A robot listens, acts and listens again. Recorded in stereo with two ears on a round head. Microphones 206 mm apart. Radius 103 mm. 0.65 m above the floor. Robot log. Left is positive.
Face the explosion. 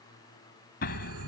note: The explosion: about 45° left or 135° left.
cmd yaw +45
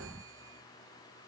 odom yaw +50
end: Facing the explosion.